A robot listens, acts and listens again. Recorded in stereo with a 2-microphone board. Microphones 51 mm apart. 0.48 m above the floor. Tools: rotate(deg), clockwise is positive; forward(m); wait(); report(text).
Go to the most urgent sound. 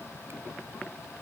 wait()
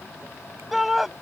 rotate(30)
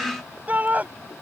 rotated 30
rotate(145)
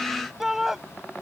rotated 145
rotate(10)
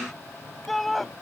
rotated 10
forward(1.0)
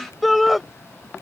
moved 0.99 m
forward(1.0)
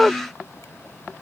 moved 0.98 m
forward(1.0)
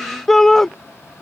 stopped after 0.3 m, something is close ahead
rotate(-10)
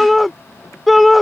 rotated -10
report("I am next to the shout.")